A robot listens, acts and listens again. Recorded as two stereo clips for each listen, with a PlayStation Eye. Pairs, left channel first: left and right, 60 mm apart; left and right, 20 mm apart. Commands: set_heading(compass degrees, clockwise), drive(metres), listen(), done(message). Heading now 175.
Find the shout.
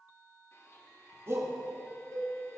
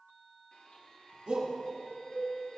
set_heading(225)
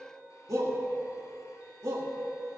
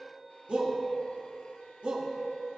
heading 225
set_heading(305)
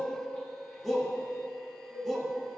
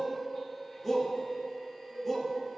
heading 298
done("Found it: a shout, straight ahead.")